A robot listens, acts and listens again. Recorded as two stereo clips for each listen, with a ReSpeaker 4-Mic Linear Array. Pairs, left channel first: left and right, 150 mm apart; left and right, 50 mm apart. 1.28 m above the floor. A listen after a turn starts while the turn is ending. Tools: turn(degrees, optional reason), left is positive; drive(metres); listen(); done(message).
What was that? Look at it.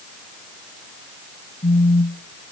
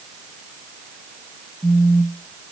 turn(degrees=65, reason="The phone buzzing: about 65° left or 115° left.")
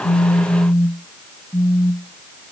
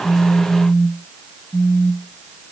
turn(degrees=15, reason="So it is at 15° left.")
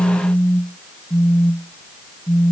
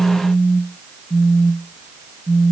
done("Facing the phone buzzing.")